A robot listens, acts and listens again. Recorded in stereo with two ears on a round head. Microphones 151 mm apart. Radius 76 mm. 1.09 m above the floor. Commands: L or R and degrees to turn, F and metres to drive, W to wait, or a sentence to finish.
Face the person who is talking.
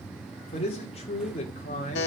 L40
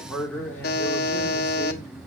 L10
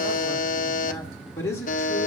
L15
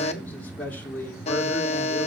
L10
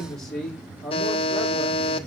Found it: a man speaking, straight ahead.